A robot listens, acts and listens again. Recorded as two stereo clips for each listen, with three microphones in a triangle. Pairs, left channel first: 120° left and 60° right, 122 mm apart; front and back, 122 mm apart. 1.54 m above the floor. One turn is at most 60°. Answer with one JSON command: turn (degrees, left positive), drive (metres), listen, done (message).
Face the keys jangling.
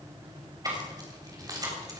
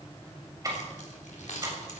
{"done": "Facing the keys jangling, 2 to 4 m away."}